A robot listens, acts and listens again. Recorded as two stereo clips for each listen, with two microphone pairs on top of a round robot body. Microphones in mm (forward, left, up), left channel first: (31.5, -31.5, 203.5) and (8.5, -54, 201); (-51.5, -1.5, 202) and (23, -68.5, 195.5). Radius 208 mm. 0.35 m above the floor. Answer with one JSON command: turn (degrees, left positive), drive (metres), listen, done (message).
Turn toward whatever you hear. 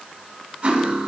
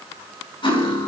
{"turn": 175}
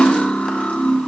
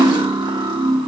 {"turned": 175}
{"done": "Found it: cutlery clinking, straight ahead, 2 to 4 m away."}